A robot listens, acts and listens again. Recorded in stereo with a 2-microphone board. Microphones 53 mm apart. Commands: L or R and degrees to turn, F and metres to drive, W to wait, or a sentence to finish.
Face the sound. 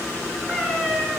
R30
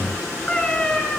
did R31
L15
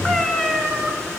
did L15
Facing the cat meowing.